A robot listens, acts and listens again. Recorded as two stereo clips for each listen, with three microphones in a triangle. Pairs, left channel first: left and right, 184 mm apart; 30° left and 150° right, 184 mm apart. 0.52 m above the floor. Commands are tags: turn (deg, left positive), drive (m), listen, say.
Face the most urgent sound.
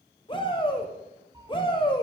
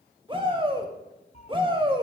<turn deg="150"/>
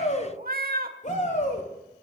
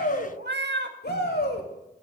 <turn deg="45"/>
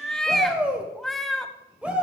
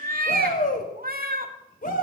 <say>Facing the shout.</say>